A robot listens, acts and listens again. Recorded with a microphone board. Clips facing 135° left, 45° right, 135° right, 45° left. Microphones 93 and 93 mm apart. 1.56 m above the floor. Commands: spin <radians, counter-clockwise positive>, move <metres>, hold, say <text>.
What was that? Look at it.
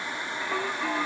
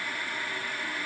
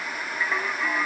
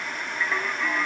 spin 2.44
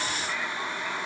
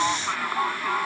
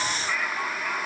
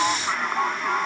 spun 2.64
spin -0.17
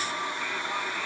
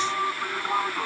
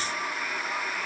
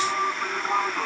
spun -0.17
say Facing the singing.